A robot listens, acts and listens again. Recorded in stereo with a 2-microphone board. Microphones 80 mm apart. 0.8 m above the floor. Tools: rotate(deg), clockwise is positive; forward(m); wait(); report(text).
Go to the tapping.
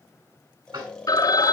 rotate(90)
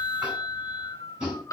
rotate(15)
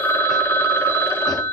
wait()
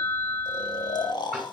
forward(1.0)
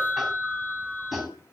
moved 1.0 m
forward(1.0)
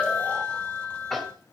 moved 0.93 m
forward(1.0)
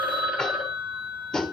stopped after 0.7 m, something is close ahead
report("Arrived at the tapping, straight ahead.")